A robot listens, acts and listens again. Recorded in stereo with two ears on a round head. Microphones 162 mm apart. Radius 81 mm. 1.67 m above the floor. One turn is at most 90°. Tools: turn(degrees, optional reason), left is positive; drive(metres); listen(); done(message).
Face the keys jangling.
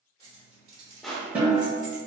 turn(degrees=-45, reason="The keys jangling: about 45° right or 135° right.")
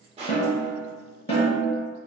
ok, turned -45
listen()
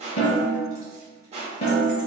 listen()
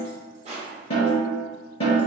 done("I heard keys jangling, but can't make it out now. It was about straight ahead or 90° right.")